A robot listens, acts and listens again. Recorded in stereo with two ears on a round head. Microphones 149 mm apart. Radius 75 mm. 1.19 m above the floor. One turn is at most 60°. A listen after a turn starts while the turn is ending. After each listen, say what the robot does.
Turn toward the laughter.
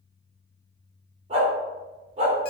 Keep listening.
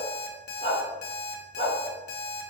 Keep listening.
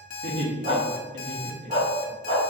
Turn 60° right.
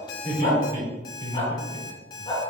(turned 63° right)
Turn 25° right.
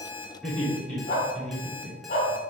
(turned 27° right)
Found it: laughter, straight ahead.